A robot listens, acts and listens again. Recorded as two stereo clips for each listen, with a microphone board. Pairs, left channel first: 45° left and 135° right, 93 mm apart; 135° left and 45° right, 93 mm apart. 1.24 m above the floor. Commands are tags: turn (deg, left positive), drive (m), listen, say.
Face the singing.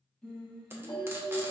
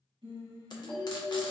<turn deg="-35"/>
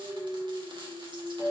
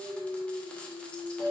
<turn deg="15"/>
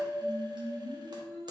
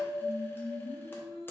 <say>Facing the singing.</say>